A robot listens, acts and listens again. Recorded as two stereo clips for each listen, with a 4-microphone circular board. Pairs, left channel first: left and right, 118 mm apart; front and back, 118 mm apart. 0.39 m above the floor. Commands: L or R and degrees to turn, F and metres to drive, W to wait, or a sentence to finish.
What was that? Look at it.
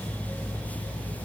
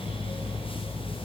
W
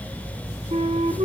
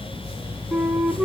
R90
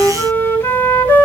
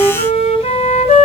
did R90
L20
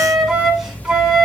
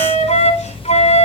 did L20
Facing the flute, 1 to 2 m away.